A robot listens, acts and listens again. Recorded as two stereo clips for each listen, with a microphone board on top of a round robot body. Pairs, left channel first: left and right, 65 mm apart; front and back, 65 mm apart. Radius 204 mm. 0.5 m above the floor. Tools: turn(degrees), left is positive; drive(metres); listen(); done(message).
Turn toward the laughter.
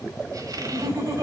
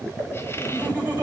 turn(degrees=-115)
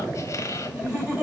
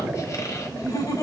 turn(degrees=-15)
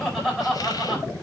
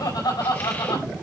done("Facing the laughter, over 4 m away.")